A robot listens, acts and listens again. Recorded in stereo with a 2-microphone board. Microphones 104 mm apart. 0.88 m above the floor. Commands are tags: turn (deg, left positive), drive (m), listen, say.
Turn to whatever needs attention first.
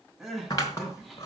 <turn deg="-30"/>
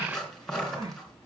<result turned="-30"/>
<turn deg="-145"/>
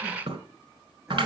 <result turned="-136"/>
<turn deg="-10"/>
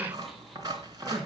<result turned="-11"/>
<listen/>
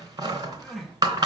<say>Facing the crying, over 4 m away.</say>